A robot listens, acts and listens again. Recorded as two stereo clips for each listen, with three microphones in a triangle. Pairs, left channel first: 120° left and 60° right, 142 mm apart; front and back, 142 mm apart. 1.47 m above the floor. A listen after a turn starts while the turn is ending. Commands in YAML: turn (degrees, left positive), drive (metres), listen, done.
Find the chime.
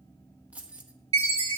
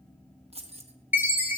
turn: -105
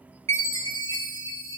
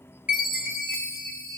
done: "Facing the chime, 2 to 4 m away."